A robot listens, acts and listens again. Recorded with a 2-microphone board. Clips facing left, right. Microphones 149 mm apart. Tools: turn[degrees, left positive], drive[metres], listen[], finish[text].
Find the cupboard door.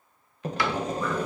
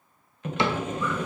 Thought: The cupboard door: about 25° right or 155° right.
Action: turn[-25]
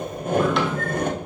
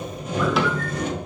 Action: listen[]
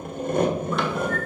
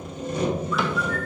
Action: listen[]
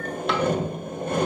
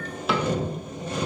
Action: finish[I heard a cupboard door, but can't make it out now. It was about straight ahead or 130° right.]